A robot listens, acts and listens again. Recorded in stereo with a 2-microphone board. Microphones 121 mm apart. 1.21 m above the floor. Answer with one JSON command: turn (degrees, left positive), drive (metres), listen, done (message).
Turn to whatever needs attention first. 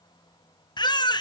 {"turn": 35}
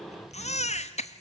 {"turn": 105}
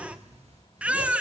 {"turn": -10}
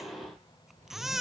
{"done": "Facing the baby crying, under 1 m away."}